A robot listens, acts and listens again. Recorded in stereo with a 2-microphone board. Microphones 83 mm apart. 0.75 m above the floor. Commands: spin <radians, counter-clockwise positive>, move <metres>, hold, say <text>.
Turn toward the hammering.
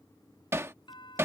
spin -0.52
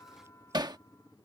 spin -2.01
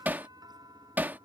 spin -0.44
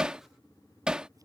spin -0.17
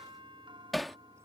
say Facing the hammering.